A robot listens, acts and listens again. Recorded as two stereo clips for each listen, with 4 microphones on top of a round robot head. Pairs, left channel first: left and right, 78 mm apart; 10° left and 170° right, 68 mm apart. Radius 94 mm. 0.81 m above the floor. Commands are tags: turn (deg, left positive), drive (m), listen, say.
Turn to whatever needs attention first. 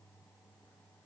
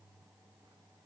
<listen/>
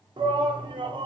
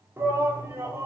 <turn deg="-110"/>
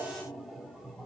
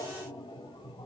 <say>Found it: a shout, straight ahead.</say>